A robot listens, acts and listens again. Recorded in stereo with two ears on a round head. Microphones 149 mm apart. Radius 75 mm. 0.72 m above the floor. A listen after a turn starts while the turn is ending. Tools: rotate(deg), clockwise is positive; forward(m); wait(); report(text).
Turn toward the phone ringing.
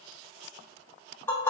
wait()
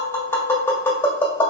wait()
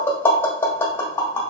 report("I can't make out a phone ringing to turn to.")